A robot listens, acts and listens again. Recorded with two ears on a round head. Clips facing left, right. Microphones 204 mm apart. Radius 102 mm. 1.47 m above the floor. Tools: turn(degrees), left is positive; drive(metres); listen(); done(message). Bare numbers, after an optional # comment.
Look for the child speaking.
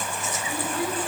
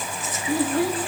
# The child speaking: about 55° right or 125° right.
turn(-55)
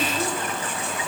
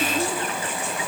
listen()
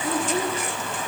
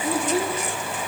done("Found it: a child speaking, straight ahead, 2 to 4 m away.")